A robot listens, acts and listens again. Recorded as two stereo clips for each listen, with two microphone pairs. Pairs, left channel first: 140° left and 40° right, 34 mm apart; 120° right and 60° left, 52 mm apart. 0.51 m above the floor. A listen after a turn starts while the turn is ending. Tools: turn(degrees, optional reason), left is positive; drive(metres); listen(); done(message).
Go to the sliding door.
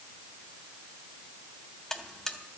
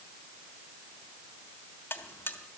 listen()
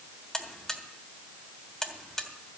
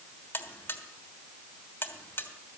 listen()
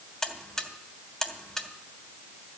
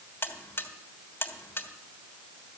done("I can't make out a sliding door, only a buzzer.")